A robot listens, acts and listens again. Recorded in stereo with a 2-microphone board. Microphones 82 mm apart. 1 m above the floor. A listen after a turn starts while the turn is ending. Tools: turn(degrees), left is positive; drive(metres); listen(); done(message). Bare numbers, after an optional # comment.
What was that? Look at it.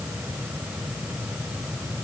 listen()
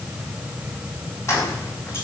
# The keys jangling: about 40° left or 140° left.
turn(40)
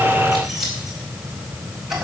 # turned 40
done("Found it: keys jangling, straight ahead.")